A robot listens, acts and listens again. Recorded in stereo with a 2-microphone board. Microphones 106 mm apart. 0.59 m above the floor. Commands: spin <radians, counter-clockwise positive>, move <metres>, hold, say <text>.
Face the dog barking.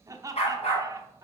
spin 1.57
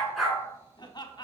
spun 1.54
say Found it: a dog barking, straight ahead, 2 to 4 m away.